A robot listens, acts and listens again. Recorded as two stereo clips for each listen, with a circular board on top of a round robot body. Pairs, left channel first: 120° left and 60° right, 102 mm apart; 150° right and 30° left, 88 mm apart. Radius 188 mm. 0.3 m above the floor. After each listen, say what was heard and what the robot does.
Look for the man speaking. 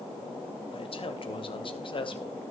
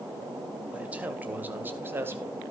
The man speaking: 90° left. Turn 90° left.
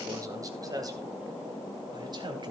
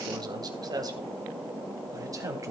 The man speaking is now 20° right. Turn 20° right.
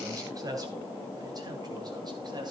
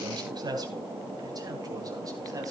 The man speaking is now 15° right. Turn 15° right.
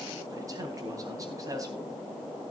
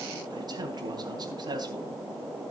Facing the man speaking, 2 to 4 m away.